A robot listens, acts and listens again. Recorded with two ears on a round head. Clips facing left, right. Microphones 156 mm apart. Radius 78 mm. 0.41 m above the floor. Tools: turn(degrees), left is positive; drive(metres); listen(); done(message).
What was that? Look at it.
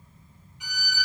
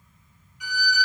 turn(degrees=20)
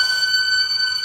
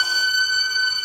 done("Found it: a violin, straight ahead.")